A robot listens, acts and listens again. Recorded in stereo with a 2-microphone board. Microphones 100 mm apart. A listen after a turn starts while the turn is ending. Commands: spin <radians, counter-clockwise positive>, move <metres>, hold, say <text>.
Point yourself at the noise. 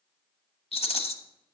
spin 1.57
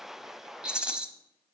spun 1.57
spin -0.17
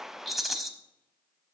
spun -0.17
say Facing the rattle, under 1 m away.